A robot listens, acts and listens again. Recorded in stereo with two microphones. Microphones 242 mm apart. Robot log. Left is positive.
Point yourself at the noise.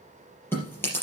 cmd yaw +30
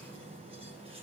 cmd idle
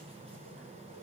cmd idle
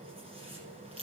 note: So it is at 25° right.
cmd yaw -25
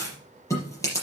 note: The chewing is now 15° left.
cmd yaw +15
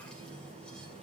cmd idle
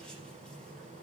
cmd idle
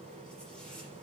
end: Facing where the chewing came from. I can't hear it now.